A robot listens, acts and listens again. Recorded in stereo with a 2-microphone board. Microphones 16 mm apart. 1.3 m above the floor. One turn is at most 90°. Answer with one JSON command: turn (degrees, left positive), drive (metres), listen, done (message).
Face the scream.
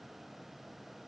{"listen": true}
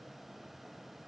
{"listen": true}
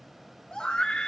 {"turn": 90}
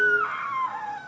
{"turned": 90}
{"turn": 15}
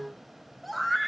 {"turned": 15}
{"done": "Facing the scream, 1 to 2 m away."}